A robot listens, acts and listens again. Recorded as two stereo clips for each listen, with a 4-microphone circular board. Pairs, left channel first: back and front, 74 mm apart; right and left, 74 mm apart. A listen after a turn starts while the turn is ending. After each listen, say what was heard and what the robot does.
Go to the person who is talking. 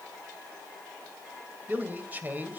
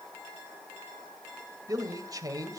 The man speaking: 60° left. Turn 60° left.
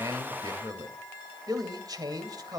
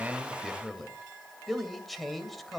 Drive 1.0 m forward.
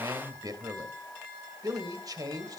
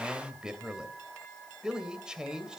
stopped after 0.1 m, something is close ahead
The man speaking is now 10° left. Turn 10° left.
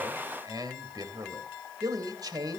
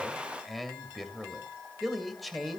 Blocked. The man speaking is further on, straight ahead.